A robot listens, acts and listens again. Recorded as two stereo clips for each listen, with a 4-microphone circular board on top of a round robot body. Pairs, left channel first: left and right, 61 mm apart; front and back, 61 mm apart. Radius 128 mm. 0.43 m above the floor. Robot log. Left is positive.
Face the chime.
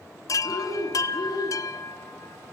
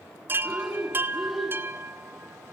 note: The chime: 120° left.
cmd yaw +120
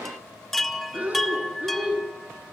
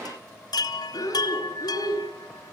end: Found it: a chime, straight ahead.